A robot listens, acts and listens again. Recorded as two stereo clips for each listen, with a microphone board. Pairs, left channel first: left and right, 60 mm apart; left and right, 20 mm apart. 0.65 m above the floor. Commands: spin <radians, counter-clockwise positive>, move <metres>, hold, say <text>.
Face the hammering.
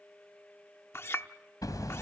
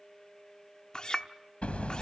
spin 1.57
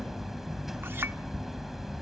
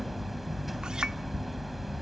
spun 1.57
say Found it: hammering, straight ahead, 2 to 4 m away.